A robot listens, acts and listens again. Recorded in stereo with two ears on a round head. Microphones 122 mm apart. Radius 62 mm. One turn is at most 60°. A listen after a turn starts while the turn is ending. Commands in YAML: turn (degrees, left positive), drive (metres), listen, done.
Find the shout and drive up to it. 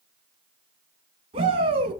turn: -40
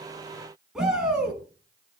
drive: 1.0
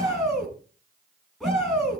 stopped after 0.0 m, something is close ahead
done: "Something is in my way. I am facing the shout but have not reached it."